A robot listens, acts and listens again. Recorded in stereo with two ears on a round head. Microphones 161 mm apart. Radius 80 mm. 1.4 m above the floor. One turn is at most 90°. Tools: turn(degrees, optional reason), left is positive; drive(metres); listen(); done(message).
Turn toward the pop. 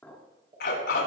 turn(degrees=-25, reason="The pop: about 25° right or 155° right.")
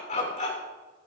listen()
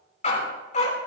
done("I heard a pop, but can't make it out now. It was about straight ahead or 130° right.")